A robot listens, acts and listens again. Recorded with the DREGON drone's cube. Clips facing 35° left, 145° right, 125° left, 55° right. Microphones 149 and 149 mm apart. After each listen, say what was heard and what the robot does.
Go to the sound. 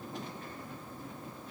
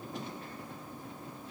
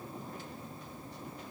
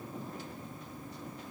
Keep listening.
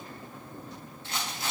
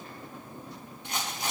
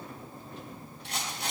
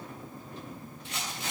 The rattle: 140° left. Turn 140° left.
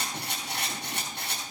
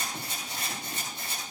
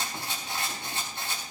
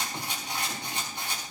The rattle is now 20° left. Turn 20° left.
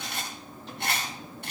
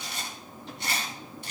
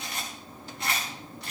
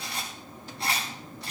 Drive 1.0 m forward.
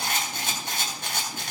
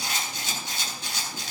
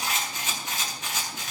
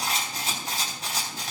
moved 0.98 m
Drive 1.0 m forward.
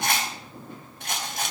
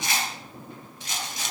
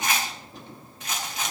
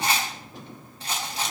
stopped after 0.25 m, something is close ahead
Something is in my way. I am facing the rattle but have not reached it.